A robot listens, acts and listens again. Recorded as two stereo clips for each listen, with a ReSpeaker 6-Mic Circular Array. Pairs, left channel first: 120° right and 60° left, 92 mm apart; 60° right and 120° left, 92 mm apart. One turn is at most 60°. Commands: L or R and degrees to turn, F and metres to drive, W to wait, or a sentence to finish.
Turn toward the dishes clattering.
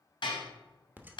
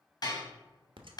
R60
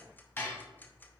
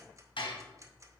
R55
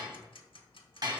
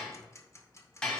L15
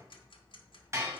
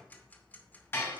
Found it: dishes clattering, straight ahead, 2 to 4 m away.